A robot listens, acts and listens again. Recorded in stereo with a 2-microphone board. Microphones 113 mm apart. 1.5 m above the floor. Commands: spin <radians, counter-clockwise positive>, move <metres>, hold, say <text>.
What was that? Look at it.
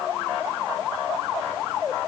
hold
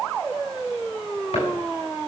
hold
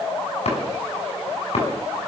spin 1.22
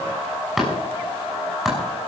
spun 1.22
say Found it: chopping, straight ahead, over 4 m away.